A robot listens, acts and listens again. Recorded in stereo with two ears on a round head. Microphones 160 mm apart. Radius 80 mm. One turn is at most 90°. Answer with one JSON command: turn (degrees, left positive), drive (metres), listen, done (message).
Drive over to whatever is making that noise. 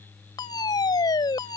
{"turn": 25}
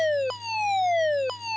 {"drive": 1.0}
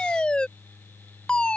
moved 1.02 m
{"drive": 1.0}
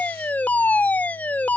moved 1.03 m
{"turn": 10}
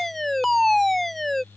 {"drive": 1.0}
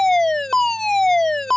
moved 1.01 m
{"drive": 1.0}
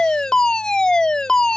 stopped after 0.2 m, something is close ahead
{"turn": 10}
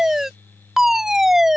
{"done": "Arrived at the fire alarm, straight ahead."}